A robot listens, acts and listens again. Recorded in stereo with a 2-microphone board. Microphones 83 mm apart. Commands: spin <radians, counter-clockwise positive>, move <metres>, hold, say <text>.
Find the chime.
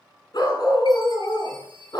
spin -1.13
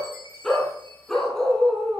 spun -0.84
spin -1.13
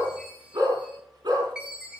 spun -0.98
spin -0.17
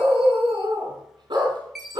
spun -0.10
say Facing the chime.